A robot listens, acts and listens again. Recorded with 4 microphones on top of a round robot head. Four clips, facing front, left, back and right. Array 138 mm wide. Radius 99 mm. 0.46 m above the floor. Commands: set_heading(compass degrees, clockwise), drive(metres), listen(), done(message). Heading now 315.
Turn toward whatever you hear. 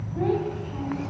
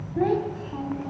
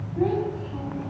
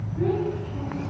set_heading(230)
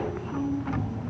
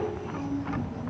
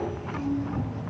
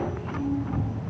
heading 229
set_heading(214)
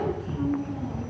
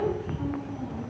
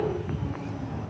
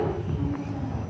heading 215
done("Facing the child speaking.")